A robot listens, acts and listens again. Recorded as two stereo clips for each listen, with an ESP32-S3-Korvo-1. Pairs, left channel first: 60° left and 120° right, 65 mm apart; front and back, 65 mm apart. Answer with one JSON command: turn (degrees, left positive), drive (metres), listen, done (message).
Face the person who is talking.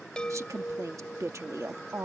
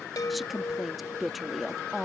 {"turn": -95}
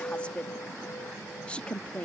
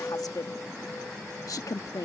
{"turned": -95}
{"turn": -10}
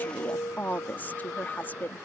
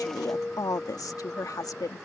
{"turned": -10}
{"done": "Found it: a woman speaking, straight ahead."}